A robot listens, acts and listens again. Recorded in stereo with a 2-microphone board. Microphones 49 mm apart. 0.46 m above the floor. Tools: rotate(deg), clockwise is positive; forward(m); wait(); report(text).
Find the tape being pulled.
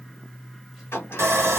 wait()
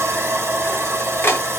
wait()
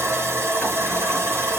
report("I can't make out tape being pulled, only a sliding door and sawing.")